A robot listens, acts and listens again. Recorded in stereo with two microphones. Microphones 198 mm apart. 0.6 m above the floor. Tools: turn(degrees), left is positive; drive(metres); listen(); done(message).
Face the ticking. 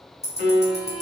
turn(degrees=-35)
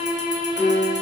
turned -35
listen()
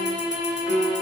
listen()
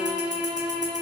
done("I heard ticking, but can't make it out now. It was about straight ahead or 110° right.")